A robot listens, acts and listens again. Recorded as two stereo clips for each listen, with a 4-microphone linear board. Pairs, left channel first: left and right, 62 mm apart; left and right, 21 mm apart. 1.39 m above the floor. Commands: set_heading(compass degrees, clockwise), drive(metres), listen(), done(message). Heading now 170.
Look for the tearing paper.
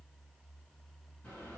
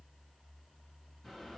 listen()
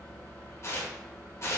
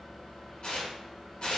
set_heading(125)
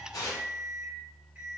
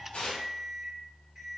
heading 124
set_heading(34)
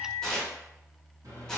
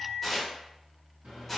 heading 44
done("Facing the tearing paper, under 1 m away.")